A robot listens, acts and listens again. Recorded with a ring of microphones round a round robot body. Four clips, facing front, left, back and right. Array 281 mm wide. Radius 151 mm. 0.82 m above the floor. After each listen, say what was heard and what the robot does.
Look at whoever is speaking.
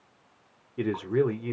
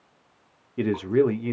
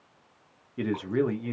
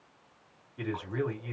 The man speaking: 90° left. Turn 90° left.
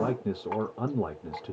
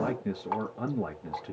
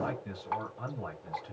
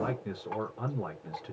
The man speaking is now 25° left. Turn 25° left.
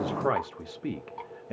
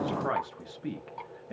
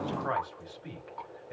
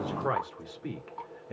Facing the man speaking.